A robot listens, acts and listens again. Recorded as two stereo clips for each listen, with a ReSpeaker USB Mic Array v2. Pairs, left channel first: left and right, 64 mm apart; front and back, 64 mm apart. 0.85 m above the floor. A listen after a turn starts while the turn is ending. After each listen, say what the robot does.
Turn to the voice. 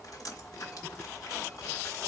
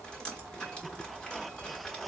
Keep listening.
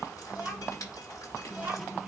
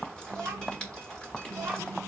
Turn 155° right.
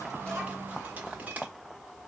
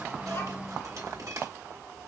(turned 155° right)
Keep listening.
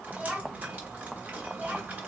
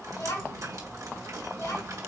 Turn 20° right.
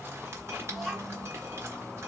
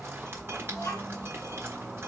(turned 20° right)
Facing the child speaking, 2 to 4 m away.